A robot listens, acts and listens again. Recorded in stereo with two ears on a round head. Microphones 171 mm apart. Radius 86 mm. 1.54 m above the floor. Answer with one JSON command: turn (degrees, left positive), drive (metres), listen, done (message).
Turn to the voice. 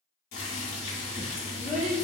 {"turn": -40}
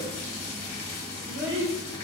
{"turn": -90}
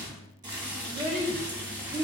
{"turn": -35}
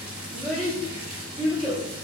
{"done": "Found it: a child speaking, straight ahead."}